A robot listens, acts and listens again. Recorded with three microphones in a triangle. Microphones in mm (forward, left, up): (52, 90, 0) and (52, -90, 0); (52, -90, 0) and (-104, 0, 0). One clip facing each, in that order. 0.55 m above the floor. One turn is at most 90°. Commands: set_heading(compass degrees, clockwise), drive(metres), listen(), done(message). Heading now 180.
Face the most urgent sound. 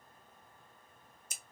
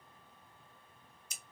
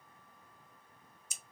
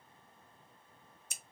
listen()
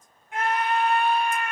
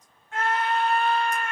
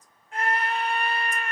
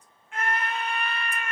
set_heading(165)
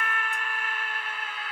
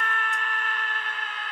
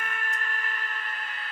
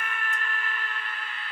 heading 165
set_heading(155)
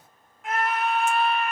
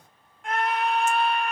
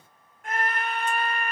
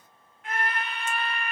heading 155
done("Facing the scream, 1 to 2 m away.")